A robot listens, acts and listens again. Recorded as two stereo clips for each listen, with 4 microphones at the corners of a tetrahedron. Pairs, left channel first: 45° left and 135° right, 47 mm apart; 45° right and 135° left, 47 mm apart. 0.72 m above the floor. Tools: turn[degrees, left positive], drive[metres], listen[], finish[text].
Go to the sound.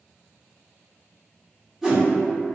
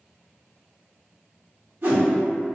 Thought: The whoosh: 140° left.
Action: turn[140]
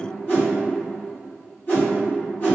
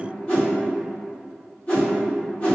Action: drive[1.0]
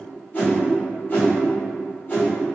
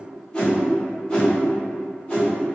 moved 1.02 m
Thought: The whoosh is now 15° left.
Action: turn[15]
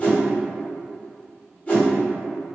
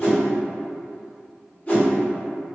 Action: drive[1.0]
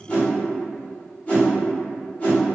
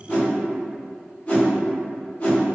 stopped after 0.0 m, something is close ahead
Action: finish[Arrived at the whoosh, straight ahead.]